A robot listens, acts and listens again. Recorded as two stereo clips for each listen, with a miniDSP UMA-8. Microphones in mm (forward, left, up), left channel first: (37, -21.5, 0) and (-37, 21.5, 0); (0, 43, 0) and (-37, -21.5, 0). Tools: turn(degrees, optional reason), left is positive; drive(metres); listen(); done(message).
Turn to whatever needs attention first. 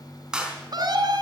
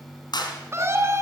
turn(degrees=-170, reason="The scream: 170° right.")
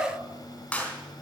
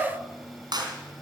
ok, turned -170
listen()
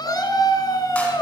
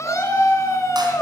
turn(degrees=15, reason="The scream is now 15° left.")
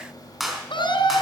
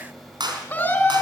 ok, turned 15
done("Facing the scream.")